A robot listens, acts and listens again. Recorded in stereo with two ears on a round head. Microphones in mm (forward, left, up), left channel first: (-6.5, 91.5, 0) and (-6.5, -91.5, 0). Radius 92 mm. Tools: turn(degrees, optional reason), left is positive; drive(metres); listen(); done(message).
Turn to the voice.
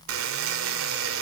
listen()
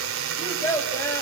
turn(degrees=30)
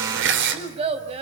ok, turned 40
turn(degrees=-30, reason="So it is at 30° right.")
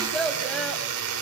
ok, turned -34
done("Facing the child speaking, over 4 m away.")